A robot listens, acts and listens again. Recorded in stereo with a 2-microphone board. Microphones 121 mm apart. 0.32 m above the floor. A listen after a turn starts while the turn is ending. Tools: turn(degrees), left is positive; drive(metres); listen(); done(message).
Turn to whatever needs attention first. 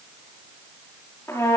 listen()
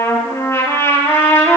listen()
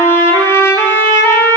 done("I can't make out anything urgent, only a trumpet.")